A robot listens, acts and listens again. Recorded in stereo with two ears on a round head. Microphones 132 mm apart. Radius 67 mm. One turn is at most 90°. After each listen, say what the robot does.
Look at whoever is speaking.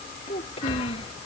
Turn 40° left.
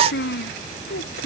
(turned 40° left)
Turn 90° left.
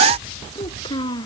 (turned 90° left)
Turn 30° left.
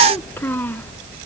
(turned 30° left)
Turn 15° left.
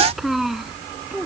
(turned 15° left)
Found it: a child speaking, straight ahead.